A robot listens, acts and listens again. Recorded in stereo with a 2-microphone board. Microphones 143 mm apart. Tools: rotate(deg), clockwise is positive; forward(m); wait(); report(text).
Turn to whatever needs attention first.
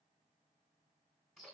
wait()
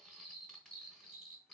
wait()
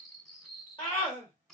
rotate(-35)
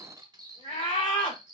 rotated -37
rotate(-105)
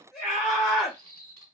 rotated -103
report("Found it: a scream, straight ahead, 1 to 2 m away.")